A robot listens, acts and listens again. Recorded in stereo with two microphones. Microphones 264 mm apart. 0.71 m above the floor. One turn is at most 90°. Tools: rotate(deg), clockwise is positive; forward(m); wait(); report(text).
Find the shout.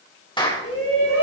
rotate(-60)
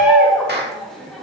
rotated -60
report("Found it: a shout, straight ahead, 2 to 4 m away.")